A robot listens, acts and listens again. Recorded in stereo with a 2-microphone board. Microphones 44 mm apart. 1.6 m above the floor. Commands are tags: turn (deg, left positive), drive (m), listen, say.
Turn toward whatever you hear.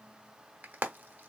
<turn deg="-45"/>
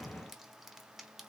<listen/>
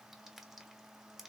<listen/>
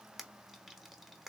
<say>Found it: frying, straight ahead, under 1 m away.</say>